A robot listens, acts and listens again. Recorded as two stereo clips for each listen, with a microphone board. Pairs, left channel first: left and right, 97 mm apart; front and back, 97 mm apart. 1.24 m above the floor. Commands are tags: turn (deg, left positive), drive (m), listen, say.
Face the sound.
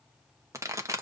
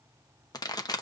<turn deg="-35"/>
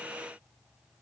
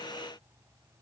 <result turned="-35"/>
<say>I heard a pop from this way, but can't make it out now.</say>